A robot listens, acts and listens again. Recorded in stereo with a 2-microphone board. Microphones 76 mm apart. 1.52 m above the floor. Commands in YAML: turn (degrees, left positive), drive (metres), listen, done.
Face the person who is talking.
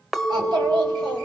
turn: -90
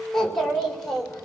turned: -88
turn: 10
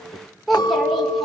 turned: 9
done: "Facing the child speaking."